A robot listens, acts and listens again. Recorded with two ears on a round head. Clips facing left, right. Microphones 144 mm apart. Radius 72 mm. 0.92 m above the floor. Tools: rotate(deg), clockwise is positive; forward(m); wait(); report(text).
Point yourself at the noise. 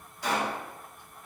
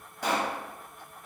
rotate(45)
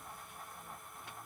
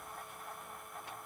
wait()
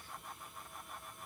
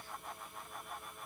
report("I heard a pop, but can't make it out now. It was about straight ahead or 90° right.")